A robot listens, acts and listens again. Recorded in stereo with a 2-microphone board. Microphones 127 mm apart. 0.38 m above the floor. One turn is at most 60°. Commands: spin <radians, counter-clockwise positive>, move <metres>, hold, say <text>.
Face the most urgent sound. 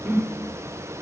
hold
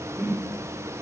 hold
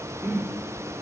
say I can't make out anything urgent, only a whoosh.